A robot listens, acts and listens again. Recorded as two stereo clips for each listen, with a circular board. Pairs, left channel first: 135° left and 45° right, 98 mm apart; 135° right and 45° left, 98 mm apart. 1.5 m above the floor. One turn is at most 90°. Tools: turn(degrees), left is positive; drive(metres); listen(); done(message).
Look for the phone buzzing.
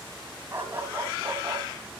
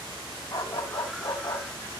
listen()
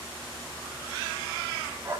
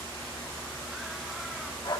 listen()
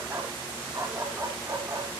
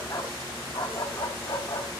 done("I can't make out a phone buzzing to turn to.")